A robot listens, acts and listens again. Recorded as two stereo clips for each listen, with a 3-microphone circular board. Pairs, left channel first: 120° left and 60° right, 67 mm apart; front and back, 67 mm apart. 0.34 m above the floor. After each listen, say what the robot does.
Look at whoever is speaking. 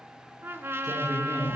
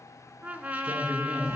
Turn 110° left.
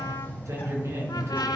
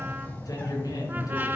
Turn 20° right.
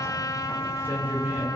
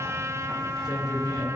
Found it: a man speaking, straight ahead.